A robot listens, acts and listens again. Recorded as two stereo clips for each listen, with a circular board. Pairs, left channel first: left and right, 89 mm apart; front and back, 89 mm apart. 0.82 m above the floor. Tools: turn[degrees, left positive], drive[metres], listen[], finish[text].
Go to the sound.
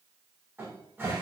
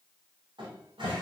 Thought: The cupboard door: 155° right.
Action: turn[-155]
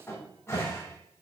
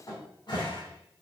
Thought: The cupboard door is now 30° left.
Action: turn[30]
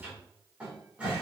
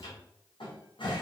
Thought: The cupboard door is now 15° right.
Action: turn[-15]
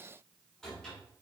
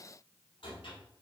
Action: drive[1.0]
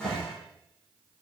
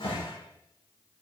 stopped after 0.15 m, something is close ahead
Thought: The cupboard door is now 10° left.
Action: turn[10]
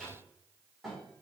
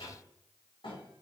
Action: finish[Something is in my way. I am facing the cupboard door but have not reached it.]